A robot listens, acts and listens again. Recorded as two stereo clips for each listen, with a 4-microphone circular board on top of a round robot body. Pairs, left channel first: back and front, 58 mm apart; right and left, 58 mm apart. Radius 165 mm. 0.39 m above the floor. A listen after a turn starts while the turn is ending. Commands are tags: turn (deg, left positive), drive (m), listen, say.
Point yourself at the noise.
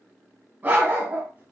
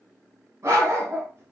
<turn deg="50"/>
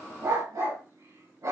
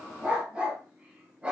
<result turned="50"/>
<turn deg="15"/>
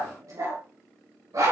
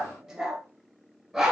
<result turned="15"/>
<say>Found it: a dog barking, straight ahead.</say>